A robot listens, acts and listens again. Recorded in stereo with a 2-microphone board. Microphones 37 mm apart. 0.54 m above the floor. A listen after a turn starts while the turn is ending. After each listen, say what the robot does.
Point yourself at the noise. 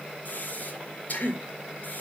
Turn 55° left.
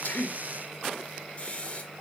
Turn 45° left.
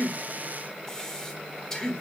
Turn 20° left.
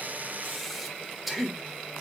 Facing the breathing.